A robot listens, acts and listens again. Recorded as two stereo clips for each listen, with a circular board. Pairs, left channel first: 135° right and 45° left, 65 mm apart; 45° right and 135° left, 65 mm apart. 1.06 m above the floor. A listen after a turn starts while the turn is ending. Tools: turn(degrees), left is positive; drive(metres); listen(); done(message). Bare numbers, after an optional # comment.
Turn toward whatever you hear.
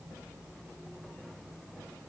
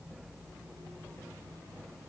listen()
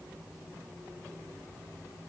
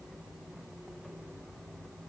listen()
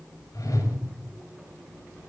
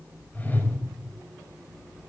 # The whoosh: 110° right.
turn(-110)
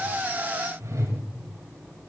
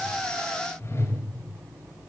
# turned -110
done("Facing the whoosh.")